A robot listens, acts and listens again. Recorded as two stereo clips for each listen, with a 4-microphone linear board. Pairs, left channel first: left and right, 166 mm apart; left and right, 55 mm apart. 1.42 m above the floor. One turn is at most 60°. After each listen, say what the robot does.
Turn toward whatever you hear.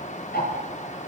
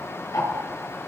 Turn 60° left.
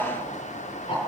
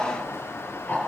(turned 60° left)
Turn 35° left.
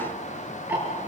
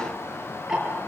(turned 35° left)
Turn 10° right.
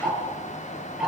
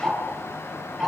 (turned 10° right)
Facing the ticking, over 4 m away.